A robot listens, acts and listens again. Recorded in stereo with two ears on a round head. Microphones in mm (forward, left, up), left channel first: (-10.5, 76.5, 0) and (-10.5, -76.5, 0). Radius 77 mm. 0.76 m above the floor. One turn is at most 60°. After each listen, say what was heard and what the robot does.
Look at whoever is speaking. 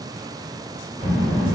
Turn 30° right.
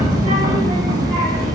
So it is at 135° right. Turn 60° right.
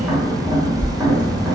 The child speaking is now 70° right. Turn 60° right.
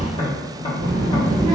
The child speaking is now 25° right. Turn 25° right.
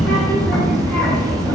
The child speaking is now 10° left. Turn 10° left.
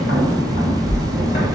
Facing the child speaking, 1 to 2 m away.